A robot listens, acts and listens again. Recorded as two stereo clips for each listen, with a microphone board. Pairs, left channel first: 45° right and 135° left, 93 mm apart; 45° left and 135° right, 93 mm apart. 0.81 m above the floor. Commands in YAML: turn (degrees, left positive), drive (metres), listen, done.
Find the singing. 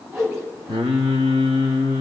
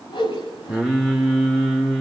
turn: 135
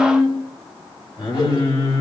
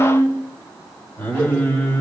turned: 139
turn: -25
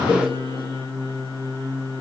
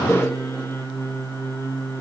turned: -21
turn: -10
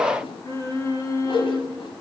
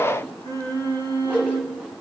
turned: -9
done: "Facing the singing."